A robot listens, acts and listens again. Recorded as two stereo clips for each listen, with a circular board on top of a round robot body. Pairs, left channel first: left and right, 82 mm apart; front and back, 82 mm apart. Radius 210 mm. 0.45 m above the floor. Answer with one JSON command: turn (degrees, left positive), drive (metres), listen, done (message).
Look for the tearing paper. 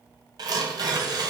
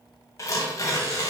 {"turn": -50}
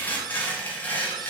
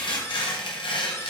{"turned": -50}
{"turn": 20}
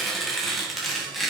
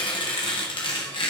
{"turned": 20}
{"done": "Facing the tearing paper."}